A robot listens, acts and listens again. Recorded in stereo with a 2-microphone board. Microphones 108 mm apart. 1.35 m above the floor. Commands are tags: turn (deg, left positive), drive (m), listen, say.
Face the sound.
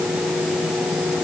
<listen/>
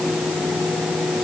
<listen/>
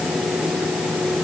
<say>I can't make out anything to turn to.</say>